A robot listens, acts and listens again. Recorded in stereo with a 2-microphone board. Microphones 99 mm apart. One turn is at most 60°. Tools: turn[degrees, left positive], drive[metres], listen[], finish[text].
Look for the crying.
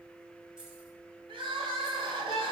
Thought: The crying: about 60° right or 120° right.
Action: turn[-60]
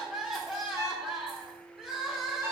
Action: finish[Facing the crying.]